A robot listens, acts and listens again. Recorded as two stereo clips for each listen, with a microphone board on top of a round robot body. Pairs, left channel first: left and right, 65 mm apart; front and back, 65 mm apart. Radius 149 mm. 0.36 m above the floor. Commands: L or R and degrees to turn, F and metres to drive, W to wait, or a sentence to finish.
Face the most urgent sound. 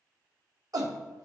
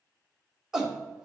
R100
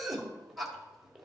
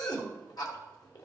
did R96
Facing the shout, 2 to 4 m away.